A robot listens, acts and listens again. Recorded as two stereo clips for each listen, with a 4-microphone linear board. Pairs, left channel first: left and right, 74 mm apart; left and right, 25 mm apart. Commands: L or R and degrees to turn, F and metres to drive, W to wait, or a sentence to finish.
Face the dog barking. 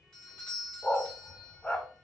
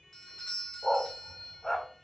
L15
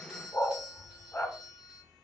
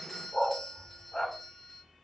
L150
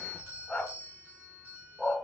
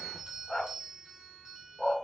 L15
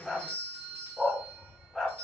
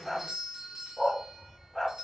Found it: a dog barking, straight ahead.